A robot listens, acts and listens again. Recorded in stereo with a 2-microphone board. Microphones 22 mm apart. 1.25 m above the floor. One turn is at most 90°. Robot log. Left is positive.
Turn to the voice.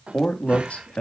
cmd yaw +90
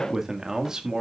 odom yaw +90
note: So it is at 35° right.
cmd yaw -35
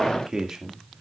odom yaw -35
note: The man speaking is now 30° right.
cmd yaw -30
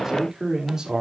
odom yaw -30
note: The man speaking is now 30° right.
cmd yaw -30
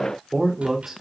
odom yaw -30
end: Found it: a man speaking, straight ahead, 2 to 4 m away.